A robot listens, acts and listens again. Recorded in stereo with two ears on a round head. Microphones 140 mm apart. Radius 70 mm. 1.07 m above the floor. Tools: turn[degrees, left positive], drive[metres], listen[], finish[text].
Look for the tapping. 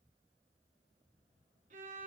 Action: listen[]
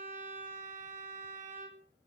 Action: listen[]
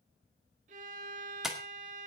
Action: turn[-30]
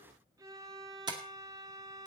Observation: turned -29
Thought: So it is at 150° right.
Action: turn[-150]
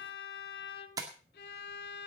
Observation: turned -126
Thought: The tapping is now 25° right.
Action: turn[-25]
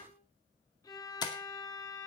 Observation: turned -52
Thought: The tapping is now 30° left.
Action: turn[30]
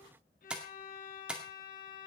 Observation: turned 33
Action: finish[Found it: tapping, straight ahead, 2 to 4 m away.]